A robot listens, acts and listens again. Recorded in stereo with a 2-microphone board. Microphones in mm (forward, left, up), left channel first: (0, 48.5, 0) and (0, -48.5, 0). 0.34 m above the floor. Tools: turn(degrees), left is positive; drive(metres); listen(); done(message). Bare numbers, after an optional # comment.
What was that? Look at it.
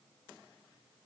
listen()
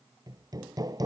# The hammering: about 40° right or 140° right.
turn(-40)
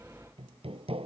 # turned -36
# So it is at 105° right.
turn(-105)
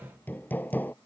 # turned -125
# The hammering is now 20° left.
turn(20)
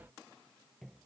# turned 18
listen()
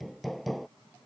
done("Found it: hammering, straight ahead.")